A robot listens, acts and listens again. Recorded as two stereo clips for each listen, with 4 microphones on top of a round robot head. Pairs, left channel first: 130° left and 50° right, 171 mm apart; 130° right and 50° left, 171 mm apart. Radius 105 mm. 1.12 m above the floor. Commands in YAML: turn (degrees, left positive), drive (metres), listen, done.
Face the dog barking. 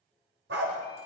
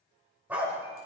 turn: -30
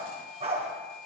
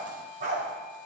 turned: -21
done: "Facing the dog barking."